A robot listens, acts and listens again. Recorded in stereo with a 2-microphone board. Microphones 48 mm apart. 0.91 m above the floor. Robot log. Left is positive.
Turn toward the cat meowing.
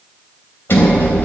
cmd idle
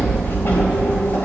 cmd idle
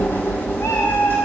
cmd yaw +90
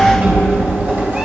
cmd idle
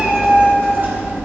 note: The cat meowing is now 25° right.
cmd yaw -25
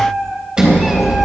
end: Found it: a cat meowing, straight ahead.